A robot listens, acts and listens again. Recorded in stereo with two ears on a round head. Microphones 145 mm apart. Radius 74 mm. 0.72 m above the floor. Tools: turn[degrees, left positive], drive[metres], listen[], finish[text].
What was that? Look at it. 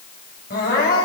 Thought: The crying: about 60° left or 120° left.
Action: turn[60]
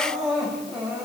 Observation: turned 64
Action: finish[Found it: crying, straight ahead.]